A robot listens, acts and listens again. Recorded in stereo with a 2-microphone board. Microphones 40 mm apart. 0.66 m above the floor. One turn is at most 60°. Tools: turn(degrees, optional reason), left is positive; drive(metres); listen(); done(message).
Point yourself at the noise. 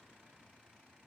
listen()
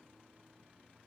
listen()
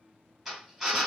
turn(degrees=30)
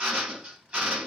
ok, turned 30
turn(degrees=-30, reason="So it is at 30° right.")
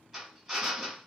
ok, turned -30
turn(degrees=-10, reason="The drill is now 10° right.")
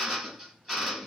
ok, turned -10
done("Found it: a drill, straight ahead, 2 to 4 m away.")